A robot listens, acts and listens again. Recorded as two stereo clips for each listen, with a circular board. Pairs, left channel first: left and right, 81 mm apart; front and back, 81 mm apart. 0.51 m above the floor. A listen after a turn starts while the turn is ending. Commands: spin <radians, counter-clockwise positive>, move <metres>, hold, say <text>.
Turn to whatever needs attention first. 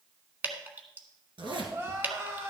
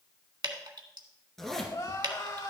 spin -0.61
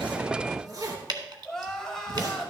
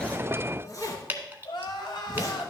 say Facing the crying.